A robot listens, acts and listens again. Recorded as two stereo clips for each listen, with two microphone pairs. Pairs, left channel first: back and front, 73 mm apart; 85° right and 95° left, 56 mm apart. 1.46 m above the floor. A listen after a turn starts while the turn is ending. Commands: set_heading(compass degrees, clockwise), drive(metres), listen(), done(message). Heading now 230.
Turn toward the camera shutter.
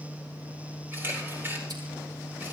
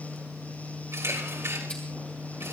set_heading(170)
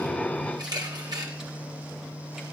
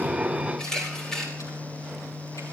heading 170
done("Facing the camera shutter.")